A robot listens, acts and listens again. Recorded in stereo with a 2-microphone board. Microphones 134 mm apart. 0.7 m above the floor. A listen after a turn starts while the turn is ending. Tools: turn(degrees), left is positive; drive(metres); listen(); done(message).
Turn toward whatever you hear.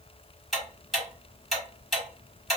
turn(degrees=30)
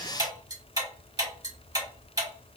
turn(degrees=-30)
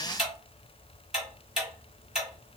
done("Facing the ticking, 1 to 2 m away.")